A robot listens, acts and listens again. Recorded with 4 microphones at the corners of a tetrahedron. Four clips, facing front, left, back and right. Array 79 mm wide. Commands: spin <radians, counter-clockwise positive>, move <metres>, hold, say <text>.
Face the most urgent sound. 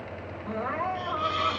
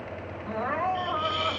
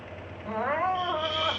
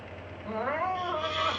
spin -2.88
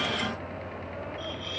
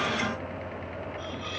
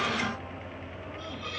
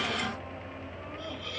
hold
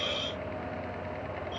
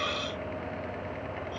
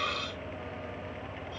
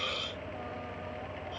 hold
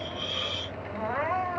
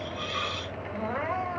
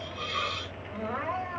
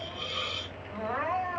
spin 0.26
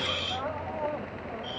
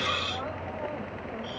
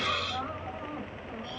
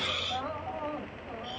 hold
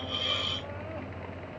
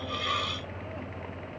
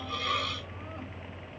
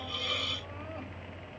hold
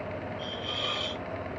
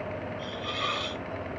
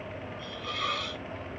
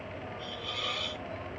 say Facing where the crying came from. I can't hear it now.